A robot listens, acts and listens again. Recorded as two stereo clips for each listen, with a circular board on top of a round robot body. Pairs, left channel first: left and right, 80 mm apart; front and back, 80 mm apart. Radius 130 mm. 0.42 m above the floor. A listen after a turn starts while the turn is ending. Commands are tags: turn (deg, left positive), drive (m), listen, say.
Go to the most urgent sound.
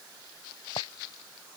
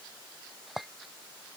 <listen/>
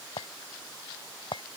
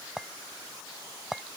<listen/>
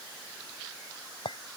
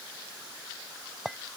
<say>I can't make out anything urgent, only a clink.</say>